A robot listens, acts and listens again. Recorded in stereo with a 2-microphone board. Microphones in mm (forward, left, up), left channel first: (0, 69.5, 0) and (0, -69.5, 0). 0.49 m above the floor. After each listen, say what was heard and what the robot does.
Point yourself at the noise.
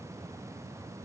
Keep listening.
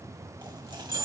The dropped coin: about 35° right or 145° right. Turn 35° right.
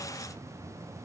Keep listening.
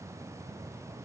I heard a dropped coin, but can't make it out now. It was about straight ahead or 110° right.